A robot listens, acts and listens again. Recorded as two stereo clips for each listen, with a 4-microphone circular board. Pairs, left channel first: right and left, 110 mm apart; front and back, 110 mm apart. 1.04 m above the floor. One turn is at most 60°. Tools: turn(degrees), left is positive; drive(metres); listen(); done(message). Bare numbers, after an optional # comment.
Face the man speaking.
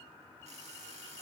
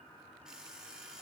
listen()
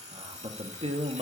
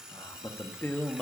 # The man speaking: 80° left.
turn(60)
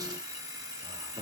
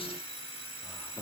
# The man speaking is now 55° left.
turn(55)
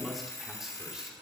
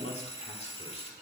done("Facing the man speaking.")